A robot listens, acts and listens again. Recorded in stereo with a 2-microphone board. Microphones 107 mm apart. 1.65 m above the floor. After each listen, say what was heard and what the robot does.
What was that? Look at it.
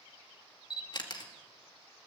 The camera shutter: about 45° left or 135° left. Turn 45° left.
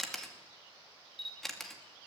Found it: a camera shutter, straight ahead, 2 to 4 m away.